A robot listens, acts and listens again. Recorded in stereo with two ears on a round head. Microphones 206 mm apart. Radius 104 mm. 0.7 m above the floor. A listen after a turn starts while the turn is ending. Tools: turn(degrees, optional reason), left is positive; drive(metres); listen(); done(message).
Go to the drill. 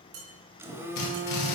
turn(degrees=90)
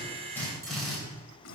drive(metres=1.0)
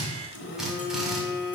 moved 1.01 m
drive(metres=1.0)
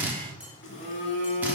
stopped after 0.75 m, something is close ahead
turn(degrees=-10, reason="The drill is now 10° right.")
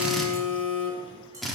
done("I am next to the drill.")